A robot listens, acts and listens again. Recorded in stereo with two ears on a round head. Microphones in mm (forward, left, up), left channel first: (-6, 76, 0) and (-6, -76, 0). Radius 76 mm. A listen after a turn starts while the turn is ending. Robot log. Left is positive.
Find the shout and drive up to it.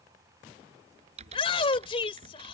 note: The shout: about 35° left or 145° left.
cmd yaw +35
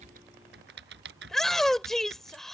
cmd fwd 1.0
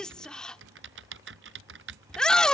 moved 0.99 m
cmd fwd 1.0
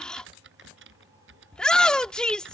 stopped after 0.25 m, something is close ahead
end: I am next to the shout.